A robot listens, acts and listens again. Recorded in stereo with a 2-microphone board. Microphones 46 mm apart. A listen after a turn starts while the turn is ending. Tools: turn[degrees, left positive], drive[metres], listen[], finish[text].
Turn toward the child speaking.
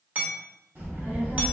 Thought: The child speaking: about 40° right or 140° right.
Action: turn[-40]
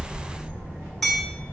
Thought: So it is at 100° right.
Action: turn[-100]
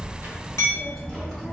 Thought: The child speaking is now 10° right.
Action: turn[-10]
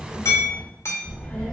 Action: finish[Found it: a child speaking, straight ahead.]